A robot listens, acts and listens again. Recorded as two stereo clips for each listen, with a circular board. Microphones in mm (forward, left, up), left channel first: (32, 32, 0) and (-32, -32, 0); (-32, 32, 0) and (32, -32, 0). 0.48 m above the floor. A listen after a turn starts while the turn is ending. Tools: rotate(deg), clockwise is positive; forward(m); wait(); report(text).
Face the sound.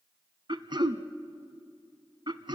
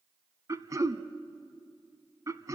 rotate(100)
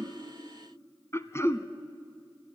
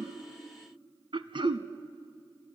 rotate(15)
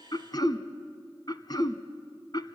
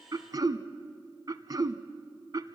report("Found it: throat clearing, straight ahead, under 1 m away.")